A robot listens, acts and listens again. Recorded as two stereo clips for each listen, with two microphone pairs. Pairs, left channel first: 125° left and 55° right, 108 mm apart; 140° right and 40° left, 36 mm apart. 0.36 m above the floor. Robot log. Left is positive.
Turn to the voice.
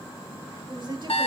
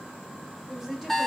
note: The woman speaking: 35° right.
cmd yaw -35
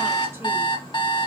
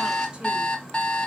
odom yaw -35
cmd idle
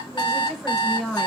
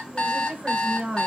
note: The woman speaking is now 45° left.
cmd yaw +45
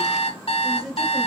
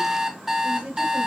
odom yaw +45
note: The woman speaking is now 35° left.
cmd yaw +35
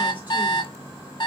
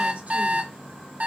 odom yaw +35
cmd idle
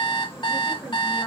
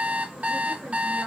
cmd idle
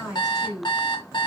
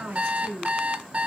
note: The woman speaking is now 25° left.
cmd yaw +25
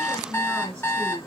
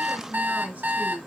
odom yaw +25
end: Found it: a woman speaking, straight ahead, 1 to 2 m away.